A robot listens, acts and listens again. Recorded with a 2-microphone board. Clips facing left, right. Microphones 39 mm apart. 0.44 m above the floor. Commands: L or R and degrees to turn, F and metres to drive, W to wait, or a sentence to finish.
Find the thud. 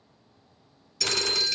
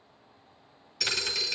R30
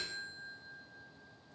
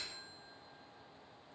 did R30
W
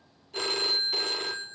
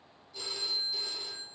I heard a thud, but can't make it out now. It was about 20° left or 140° right.